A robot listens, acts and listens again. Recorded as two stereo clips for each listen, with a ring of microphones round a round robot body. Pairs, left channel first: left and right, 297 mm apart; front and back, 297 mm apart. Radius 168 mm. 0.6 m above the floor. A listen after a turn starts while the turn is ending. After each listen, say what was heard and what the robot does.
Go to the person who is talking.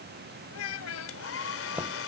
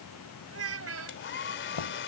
The child speaking: 140° left. Turn 140° left.
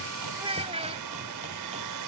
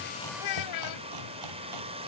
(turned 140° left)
The child speaking is now 20° right. Turn 20° right.
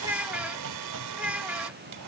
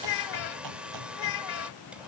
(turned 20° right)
Drive 1.0 m forward.
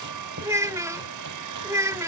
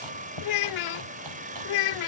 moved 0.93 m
The child speaking is now 10° right. Turn 10° right.
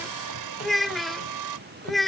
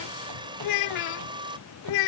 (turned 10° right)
Drive 1.0 m forward.
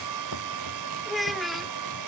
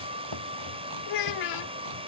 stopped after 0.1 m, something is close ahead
I am next to the child speaking.